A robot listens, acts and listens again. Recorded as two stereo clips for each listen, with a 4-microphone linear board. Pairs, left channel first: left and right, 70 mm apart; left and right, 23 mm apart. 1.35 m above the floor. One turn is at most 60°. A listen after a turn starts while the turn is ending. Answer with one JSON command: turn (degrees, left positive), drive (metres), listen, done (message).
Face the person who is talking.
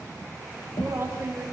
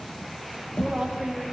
{"turn": -30}
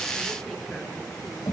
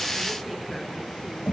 {"listen": true}
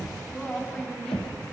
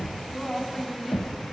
{"turn": 10}
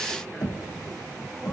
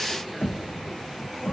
{"listen": true}
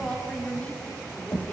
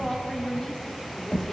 {"turn": 20}
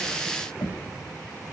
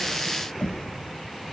{"listen": true}
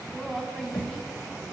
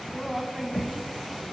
{"done": "Found it: a woman speaking, straight ahead, over 4 m away."}